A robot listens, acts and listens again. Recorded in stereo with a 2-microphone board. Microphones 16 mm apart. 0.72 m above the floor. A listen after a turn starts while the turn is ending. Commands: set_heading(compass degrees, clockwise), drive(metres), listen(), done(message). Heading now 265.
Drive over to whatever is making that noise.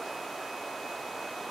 listen()
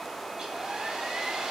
set_heading(325)
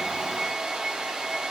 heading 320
set_heading(20)
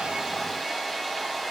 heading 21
drive(1.0)
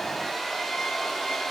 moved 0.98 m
set_heading(11)
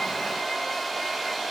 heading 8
drive(1.0)
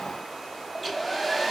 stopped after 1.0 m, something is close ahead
done("Arrived at the hair dryer, straight ahead.")